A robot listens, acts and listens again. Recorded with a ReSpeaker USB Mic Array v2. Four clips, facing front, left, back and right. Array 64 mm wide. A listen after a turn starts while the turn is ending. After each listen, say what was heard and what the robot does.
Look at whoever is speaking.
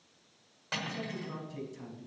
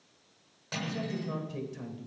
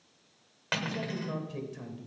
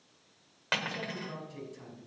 The man speaking: 145° left. Turn 145° left.
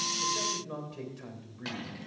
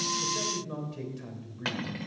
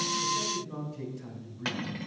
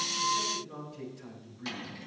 The man speaking is now 30° left. Turn 30° left.
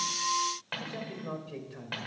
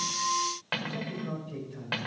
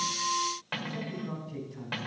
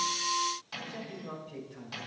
Facing the man speaking, 2 to 4 m away.